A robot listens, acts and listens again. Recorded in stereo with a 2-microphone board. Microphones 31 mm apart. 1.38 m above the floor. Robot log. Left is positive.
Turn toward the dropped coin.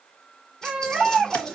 note: The dropped coin: about 25° left or 155° left.
cmd yaw +25
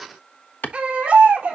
cmd idle
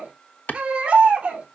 end: I heard a dropped coin, but can't make it out now. It was about straight ahead or 130° left.